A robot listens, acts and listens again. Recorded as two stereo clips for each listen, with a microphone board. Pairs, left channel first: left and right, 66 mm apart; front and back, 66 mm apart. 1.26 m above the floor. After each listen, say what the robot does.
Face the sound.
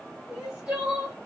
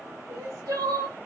Turn 165° right.
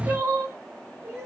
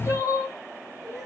Turn 40° right.
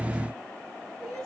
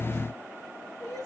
Facing the crying.